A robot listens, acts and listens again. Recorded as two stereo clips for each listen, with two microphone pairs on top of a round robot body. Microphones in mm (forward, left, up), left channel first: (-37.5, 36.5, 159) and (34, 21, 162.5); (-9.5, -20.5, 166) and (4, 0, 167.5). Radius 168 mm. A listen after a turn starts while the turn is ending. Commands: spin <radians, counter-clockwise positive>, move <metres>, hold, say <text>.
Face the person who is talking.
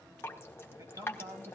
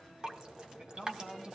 spin 0.61
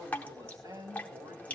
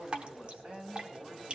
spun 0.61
spin 0.44
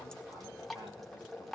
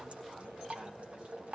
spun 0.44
hold
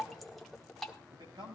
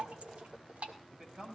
say Facing the man speaking.